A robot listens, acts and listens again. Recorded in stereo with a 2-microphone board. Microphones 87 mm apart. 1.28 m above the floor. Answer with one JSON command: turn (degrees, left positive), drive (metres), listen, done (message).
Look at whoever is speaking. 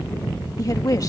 {"turn": 40}
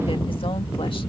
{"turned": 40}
{"listen": true}
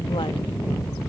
{"listen": true}
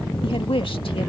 {"turn": 100}
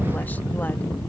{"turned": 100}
{"listen": true}
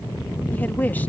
{"turn": 20}
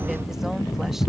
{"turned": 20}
{"listen": true}
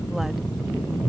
{"listen": true}
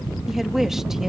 {"done": "Found it: a woman speaking, straight ahead."}